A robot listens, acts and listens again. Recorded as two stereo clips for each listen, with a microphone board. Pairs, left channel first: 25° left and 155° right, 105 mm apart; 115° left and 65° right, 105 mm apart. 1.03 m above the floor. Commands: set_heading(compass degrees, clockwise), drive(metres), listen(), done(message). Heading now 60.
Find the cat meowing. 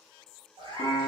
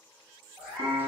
set_heading(205)
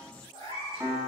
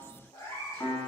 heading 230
set_heading(165)
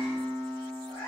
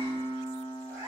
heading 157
set_heading(147)
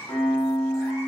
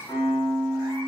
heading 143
done("Found it: a cat meowing, straight ahead.")